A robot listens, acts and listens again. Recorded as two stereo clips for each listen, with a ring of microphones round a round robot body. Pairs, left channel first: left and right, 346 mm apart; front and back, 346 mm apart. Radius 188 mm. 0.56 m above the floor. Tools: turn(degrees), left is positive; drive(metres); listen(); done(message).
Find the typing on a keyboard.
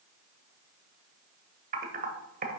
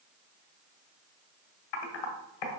turn(degrees=-25)
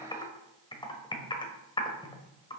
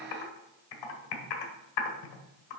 turn(degrees=15)
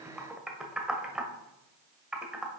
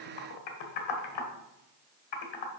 done("Facing the typing on a keyboard.")